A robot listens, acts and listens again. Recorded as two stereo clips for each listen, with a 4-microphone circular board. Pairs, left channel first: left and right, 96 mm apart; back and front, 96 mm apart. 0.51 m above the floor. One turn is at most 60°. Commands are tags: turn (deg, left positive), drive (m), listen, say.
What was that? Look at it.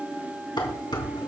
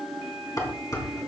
<turn deg="60"/>
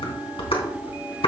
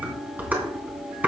<turn deg="60"/>
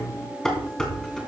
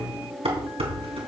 <say>Facing the dishes clattering.</say>